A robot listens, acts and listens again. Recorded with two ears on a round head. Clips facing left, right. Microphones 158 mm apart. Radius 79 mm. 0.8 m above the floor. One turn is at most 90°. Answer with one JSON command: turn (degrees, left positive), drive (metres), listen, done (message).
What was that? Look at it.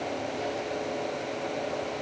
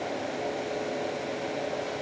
{"listen": true}
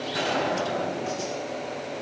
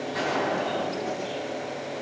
{"turn": 40}
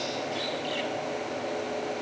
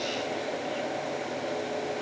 {"listen": true}
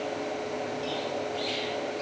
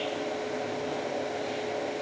{"done": "I heard a gunshot, but can't make it out now. It was about straight ahead or 100° left."}